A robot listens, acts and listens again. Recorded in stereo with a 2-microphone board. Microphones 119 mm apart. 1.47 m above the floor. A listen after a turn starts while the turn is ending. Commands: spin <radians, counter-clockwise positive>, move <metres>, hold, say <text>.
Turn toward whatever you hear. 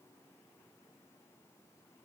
hold
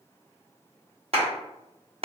spin -0.96
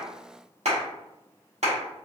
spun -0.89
spin -1.22
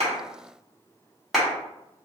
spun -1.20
say Found it: a clap, straight ahead, 1 to 2 m away.